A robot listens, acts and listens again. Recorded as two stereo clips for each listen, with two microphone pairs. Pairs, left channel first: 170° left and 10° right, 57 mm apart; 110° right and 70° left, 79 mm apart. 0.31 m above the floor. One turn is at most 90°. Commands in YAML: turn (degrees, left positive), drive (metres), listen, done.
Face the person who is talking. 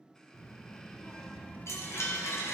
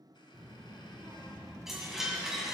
turn: 90
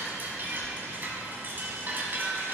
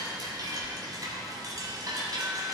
turn: 65
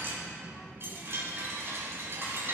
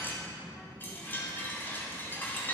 turn: 15
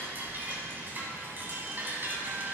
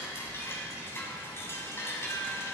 turn: 10
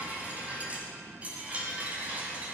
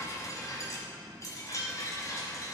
listen: true
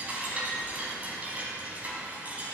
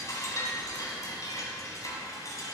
listen: true
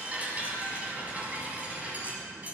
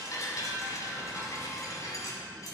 done: "Facing where the child speaking came from. I can't hear it now."